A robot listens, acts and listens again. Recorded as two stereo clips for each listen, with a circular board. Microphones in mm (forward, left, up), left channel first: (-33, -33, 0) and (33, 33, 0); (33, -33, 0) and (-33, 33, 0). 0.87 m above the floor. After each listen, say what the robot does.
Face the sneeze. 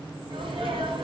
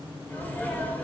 Turn 25° left.
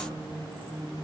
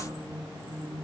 I heard a sneeze from this way, but can't make it out now.